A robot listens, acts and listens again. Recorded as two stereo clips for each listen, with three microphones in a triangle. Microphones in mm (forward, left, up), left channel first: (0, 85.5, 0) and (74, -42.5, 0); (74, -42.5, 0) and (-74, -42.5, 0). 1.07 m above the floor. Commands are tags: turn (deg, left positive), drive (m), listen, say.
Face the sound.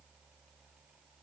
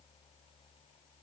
<listen/>
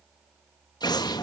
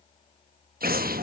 <turn deg="180"/>
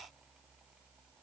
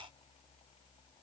<say>Facing where the explosion came from. I can't hear it now.</say>